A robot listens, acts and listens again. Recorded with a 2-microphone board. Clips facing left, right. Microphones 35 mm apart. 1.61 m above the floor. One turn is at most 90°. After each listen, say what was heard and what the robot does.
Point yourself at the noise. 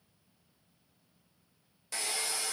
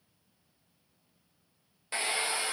The hair dryer: about 30° right or 150° right. Turn 30° right.
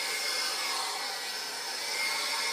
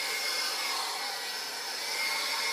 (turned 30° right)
Found it: a hair dryer, straight ahead, under 1 m away.